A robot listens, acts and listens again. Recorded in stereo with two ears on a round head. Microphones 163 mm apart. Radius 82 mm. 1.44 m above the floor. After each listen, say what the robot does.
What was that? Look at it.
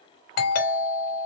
Turn 55° left.
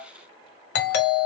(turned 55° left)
Turn 65° left.
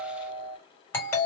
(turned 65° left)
Turn 15° left.
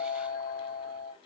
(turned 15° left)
Found it: a doorbell, straight ahead, 2 to 4 m away.